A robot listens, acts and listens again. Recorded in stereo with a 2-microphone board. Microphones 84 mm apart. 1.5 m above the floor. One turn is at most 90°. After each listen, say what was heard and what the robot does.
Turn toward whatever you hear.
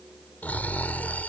The snoring: about 20° left or 160° left. Turn 20° left.
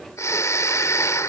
So it is at 140° left. Turn 90° left.
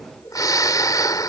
The snoring is now 50° left. Turn 50° left.
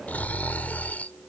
The snoring is now 20° left. Turn 20° left.
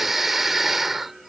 Found it: snoring, straight ahead.